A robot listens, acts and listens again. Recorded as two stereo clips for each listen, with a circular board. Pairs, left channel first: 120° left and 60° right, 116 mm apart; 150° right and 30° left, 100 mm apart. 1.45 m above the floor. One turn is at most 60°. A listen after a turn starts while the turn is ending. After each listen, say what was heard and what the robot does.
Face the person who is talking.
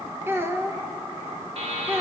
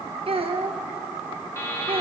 The child speaking: 10° left. Turn 10° left.
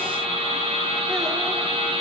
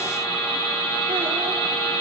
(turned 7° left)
Keep listening.
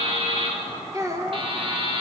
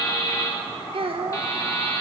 Found it: a child speaking, straight ahead, 1 to 2 m away.